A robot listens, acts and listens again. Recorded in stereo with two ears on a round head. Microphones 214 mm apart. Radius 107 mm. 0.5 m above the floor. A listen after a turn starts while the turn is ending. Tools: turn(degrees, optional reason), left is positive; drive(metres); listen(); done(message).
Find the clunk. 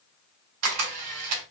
listen()
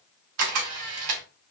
listen()
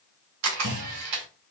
turn(degrees=-50, reason="The clunk: about 50° right or 130° right.")
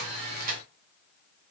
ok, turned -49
listen()
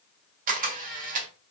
done("I heard a clunk, but can't make it out now. It was about straight ahead or 85° right.")